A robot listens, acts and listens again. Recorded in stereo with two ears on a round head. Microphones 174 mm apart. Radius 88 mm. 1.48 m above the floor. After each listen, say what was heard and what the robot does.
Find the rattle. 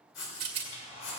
The rattle: about 30° right or 150° right. Turn 30° right.
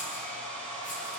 Keep listening.
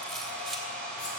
Keep listening.
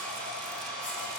I heard a rattle, but can't make it out now. It was about straight ahead or 120° right.